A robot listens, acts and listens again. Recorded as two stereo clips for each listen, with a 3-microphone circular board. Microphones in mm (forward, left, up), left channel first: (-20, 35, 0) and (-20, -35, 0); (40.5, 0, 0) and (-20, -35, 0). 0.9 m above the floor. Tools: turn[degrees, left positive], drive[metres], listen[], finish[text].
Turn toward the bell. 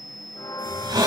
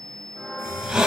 Thought: The bell: 125° left.
Action: turn[125]
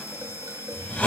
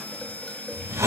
Action: listen[]
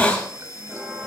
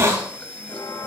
Action: finish[Found it: a bell, straight ahead.]